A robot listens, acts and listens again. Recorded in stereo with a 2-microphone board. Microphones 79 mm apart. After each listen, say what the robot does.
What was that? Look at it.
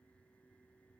Keep listening.
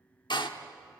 Turn 70° left.
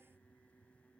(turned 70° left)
Keep listening.
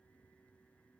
I heard a door slam, but can't make it out now. It was about straight ahead or 40° left.